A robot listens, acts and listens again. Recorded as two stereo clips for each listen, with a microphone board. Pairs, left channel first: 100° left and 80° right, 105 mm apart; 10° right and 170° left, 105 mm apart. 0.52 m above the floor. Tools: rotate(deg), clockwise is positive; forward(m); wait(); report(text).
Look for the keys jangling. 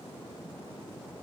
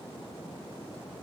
wait()
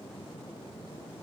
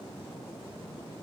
wait()
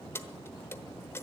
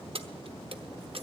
rotate(-165)
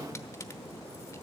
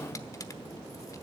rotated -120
rotate(-45)
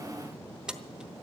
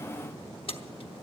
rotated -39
report("Facing the keys jangling.")